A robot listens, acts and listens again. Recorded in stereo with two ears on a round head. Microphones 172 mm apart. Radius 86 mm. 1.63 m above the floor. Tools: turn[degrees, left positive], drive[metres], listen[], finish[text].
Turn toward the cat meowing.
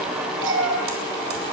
Thought: The cat meowing: about 70° right or 110° right.
Action: turn[-70]
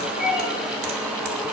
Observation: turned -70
Action: finish[Found it: a cat meowing, straight ahead.]